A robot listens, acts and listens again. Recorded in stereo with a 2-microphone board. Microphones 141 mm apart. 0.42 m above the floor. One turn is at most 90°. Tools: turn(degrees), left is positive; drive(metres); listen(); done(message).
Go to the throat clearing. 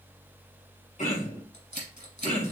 turn(degrees=70)
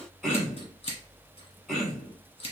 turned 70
drive(metres=1.0)
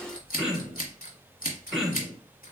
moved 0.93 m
drive(metres=1.0)
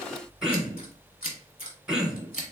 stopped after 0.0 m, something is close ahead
done("I am next to the throat clearing.")